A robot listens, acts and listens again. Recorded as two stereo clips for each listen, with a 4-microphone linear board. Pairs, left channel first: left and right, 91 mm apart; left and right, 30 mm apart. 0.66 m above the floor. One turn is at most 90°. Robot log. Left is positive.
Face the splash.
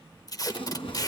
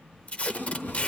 cmd yaw +90
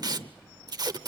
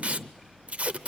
end: I heard a splash from this way, but can't make it out now.